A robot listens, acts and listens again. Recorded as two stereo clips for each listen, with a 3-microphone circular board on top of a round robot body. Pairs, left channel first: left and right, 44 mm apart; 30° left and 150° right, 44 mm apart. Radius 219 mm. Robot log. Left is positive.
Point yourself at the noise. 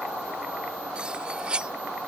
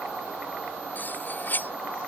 note: The cutlery clinking: 20° right.
cmd yaw -20
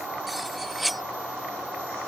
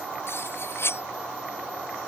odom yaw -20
end: Found it: cutlery clinking, straight ahead.